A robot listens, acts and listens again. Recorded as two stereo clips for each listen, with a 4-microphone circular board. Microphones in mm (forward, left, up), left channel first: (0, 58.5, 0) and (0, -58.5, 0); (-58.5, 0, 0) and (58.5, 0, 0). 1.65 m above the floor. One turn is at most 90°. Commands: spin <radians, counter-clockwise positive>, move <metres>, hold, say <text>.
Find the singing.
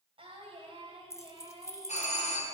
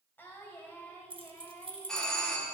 spin -1.57
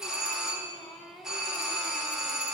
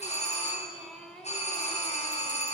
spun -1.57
spin 1.57
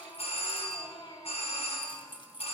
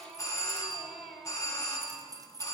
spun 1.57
spin 1.57
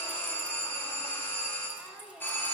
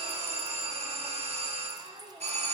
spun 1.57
spin -0.17
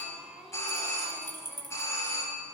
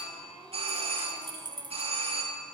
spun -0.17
say Facing the singing, 1 to 2 m away.